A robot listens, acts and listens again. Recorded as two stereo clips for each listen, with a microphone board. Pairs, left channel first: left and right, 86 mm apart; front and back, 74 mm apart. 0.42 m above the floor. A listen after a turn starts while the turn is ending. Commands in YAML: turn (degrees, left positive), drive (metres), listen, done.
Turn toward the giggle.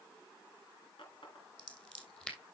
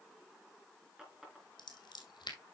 listen: true
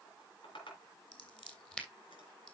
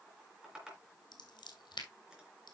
listen: true
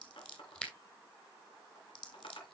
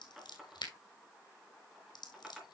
done: "I can't make out a giggle to turn to."